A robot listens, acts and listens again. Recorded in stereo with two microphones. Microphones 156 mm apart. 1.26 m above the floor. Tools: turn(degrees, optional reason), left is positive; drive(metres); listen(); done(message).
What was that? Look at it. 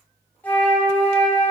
turn(degrees=30)
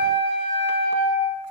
turn(degrees=135, reason="So it is at 135° left.")
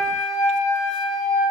turn(degrees=25, reason="The flute is now 25° left.")
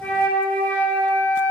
turn(degrees=10, reason="The flute is now 10° left.")
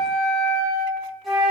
done("Found it: a flute, straight ahead.")